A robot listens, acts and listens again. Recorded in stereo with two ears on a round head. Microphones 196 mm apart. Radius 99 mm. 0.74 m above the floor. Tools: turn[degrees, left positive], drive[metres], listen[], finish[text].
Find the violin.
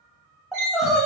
Thought: The violin: about 55° right or 125° right.
Action: turn[-55]
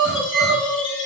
Action: listen[]
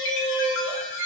Action: listen[]
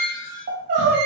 Thought: So it is at 40° right.
Action: turn[-40]
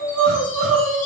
Action: listen[]
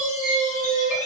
Thought: The violin is now 15° right.
Action: turn[-15]
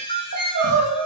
Action: finish[Facing the violin.]